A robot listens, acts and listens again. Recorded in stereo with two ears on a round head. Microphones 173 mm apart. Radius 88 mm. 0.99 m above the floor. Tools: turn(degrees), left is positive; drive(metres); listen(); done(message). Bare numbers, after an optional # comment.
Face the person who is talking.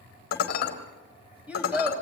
turn(-30)
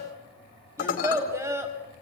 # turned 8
turn(-30)
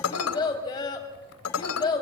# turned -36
# So it is at 20° left.
turn(20)
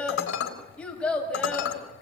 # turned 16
done("Facing the child speaking, 2 to 4 m away.")